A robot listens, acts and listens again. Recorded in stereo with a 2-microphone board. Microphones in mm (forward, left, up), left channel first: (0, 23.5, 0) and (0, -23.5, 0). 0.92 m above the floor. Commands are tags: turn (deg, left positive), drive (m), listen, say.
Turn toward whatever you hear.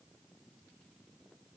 <listen/>
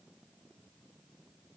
<listen/>
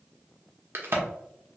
<turn deg="-55"/>
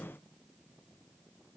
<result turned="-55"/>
<listen/>
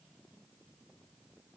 <say>I heard a crack, but can't make it out now. It was about straight ahead or 70° right.</say>